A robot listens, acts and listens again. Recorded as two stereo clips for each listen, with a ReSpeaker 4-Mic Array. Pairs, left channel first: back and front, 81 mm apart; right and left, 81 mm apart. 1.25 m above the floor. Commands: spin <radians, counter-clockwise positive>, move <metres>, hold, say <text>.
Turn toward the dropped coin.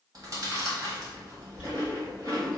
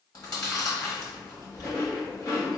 spin -1.31
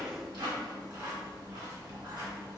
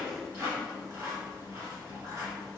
say I heard a dropped coin from this way, but can't make it out now.